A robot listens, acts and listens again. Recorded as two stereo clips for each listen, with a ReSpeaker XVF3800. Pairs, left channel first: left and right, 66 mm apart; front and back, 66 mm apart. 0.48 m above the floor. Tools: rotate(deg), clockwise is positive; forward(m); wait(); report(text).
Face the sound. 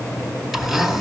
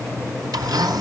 rotate(175)
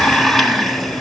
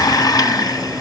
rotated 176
report("Facing the blender.")